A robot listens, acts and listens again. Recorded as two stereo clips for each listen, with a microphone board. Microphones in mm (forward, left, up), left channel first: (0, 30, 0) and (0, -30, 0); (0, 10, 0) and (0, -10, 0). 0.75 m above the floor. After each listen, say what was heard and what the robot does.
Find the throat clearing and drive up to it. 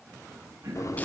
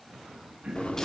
The throat clearing: about 60° right or 120° right. Turn 60° right.
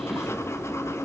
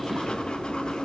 Keep listening.
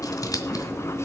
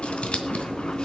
Keep listening.
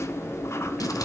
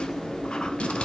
I heard throat clearing, but can't make it out now. It was about straight ahead or 60° right. I did not reach it.